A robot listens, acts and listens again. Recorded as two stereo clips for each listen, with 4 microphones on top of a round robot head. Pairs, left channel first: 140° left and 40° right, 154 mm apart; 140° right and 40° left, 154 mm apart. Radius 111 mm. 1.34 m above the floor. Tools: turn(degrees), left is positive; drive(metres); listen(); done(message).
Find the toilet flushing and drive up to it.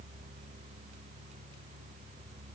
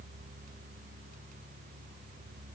listen()
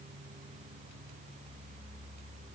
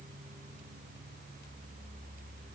listen()
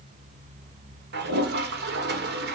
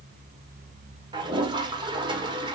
turn(degrees=-25)
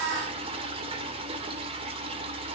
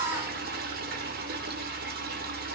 turn(degrees=15)
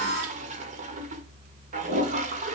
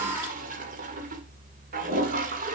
drive(metres=1.0)
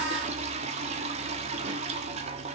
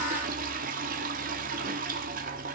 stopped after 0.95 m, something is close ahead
turn(degrees=10)
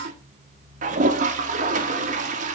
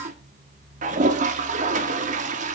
done("Arrived at the toilet flushing, straight ahead.")